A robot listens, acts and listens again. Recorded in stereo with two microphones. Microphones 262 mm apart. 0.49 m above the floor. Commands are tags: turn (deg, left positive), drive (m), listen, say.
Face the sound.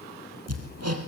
<turn deg="-70"/>
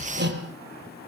<turn deg="-40"/>
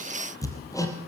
<turn deg="10"/>
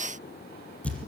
<say>Facing the hammering, over 4 m away.</say>